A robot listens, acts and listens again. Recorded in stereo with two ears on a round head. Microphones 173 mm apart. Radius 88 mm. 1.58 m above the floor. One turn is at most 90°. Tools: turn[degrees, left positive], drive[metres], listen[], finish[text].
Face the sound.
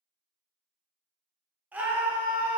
Action: turn[-30]
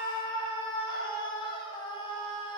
Thought: So it is at 25° left.
Action: turn[25]
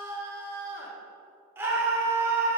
Thought: The scream is now 10° right.
Action: turn[-10]
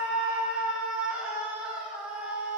Action: finish[Facing the scream.]